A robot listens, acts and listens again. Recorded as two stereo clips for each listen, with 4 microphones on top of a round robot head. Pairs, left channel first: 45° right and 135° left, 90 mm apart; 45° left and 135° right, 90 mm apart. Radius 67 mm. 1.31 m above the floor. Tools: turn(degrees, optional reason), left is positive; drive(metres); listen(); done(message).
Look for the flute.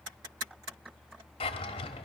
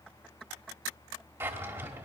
listen()
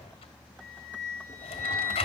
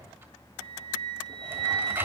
turn(degrees=-170, reason="The flute: 170° right.")
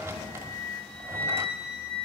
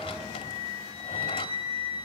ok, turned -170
turn(degrees=-35, reason="The flute is now 35° right.")
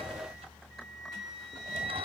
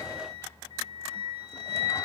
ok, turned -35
done("Found it: a flute, straight ahead.")